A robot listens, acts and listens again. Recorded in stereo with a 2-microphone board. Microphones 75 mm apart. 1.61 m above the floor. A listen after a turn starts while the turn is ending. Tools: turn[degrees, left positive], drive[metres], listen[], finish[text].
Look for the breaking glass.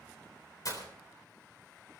Thought: The breaking glass: about 55° left or 125° left.
Action: turn[55]
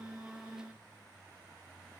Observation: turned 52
Action: listen[]
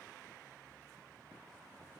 Action: finish[I heard breaking glass, but can't make it out now. It was about straight ahead or 75° left.]